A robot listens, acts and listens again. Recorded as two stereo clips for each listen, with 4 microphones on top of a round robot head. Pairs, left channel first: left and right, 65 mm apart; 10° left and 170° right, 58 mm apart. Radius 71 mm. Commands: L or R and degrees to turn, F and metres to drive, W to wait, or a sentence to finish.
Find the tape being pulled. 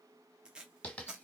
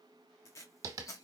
R15
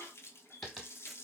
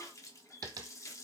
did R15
W
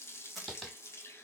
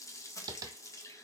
W
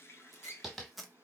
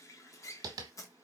Found it: tape being pulled, straight ahead.